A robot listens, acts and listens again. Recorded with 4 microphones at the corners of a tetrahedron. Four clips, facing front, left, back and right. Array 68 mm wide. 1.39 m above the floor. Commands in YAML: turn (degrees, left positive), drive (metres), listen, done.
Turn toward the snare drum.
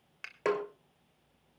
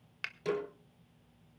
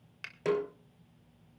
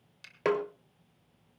turn: -65
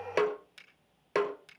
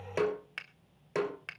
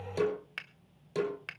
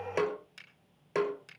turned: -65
done: "Found it: a snare drum, straight ahead."